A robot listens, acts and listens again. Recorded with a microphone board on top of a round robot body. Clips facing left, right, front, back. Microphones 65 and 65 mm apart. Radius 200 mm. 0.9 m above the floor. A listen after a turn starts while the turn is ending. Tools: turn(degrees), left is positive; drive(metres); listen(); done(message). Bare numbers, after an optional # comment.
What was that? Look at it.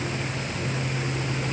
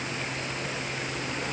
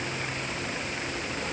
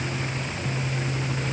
listen()
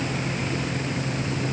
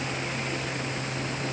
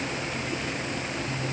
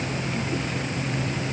listen()
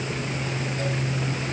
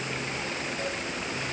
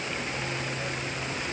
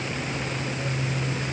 done("I can't make out anything.")